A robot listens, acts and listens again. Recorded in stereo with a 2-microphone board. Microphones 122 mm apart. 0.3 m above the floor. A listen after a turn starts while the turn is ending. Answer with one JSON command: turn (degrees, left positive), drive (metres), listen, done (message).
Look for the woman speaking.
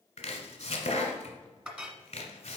{"listen": true}
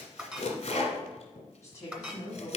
{"turn": 30}
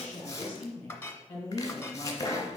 {"turn": 20}
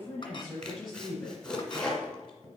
{"done": "Found it: a woman speaking, straight ahead, 2 to 4 m away."}